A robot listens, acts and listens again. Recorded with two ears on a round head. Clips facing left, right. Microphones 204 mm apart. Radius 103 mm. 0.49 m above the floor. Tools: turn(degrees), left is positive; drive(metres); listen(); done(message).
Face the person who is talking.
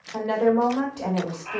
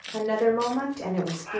turn(degrees=-30)
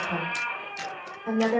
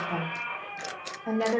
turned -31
turn(degrees=15)
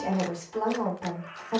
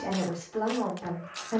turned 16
done("Facing the woman speaking.")